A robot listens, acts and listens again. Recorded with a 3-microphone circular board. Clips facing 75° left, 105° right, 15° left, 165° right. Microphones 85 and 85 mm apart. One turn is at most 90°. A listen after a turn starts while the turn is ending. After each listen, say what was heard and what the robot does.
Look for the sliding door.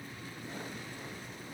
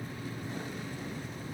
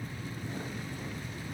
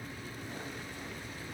Keep listening.
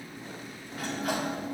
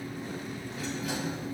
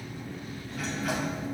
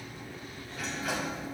The sliding door: 105° left. Turn 90° left.
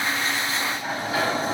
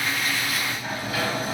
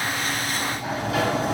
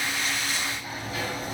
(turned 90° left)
The sliding door is now 15° left. Turn 15° left.
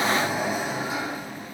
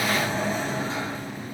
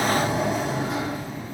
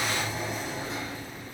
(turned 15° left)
Facing the sliding door.